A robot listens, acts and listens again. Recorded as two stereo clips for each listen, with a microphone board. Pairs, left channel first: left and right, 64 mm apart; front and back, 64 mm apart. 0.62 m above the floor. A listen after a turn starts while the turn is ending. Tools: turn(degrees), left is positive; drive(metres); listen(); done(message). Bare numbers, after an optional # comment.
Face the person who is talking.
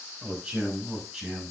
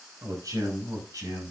# The man speaking: 175° right.
turn(-175)
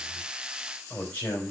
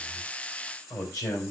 # The man speaking is now 25° left.
turn(25)
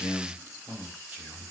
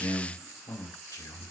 # The man speaking is now 15° right.
turn(-15)
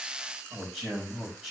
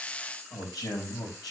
done("Facing the man speaking, over 4 m away.")